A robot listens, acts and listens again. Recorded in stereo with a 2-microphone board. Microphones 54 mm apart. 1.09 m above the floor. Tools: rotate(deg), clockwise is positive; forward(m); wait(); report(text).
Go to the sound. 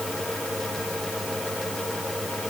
wait()
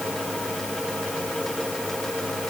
wait()
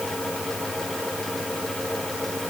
report("I can't make out anything to turn to.")